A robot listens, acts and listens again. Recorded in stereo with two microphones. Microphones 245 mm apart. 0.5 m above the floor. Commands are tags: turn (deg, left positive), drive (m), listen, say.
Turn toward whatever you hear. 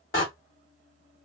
<turn deg="55"/>
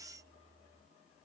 <listen/>
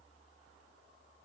<say>I heard a door slam, but can't make it out now. It was about straight ahead or 70° left.</say>